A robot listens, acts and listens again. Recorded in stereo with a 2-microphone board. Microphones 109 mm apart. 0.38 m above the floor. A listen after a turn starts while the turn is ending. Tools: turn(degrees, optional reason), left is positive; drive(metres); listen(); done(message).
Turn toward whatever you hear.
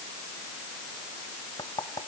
turn(degrees=40, reason="The knocking: about 40° left or 140° left.")
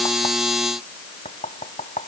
turn(degrees=100, reason="So it is at 100° left.")
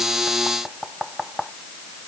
done("Facing the knocking.")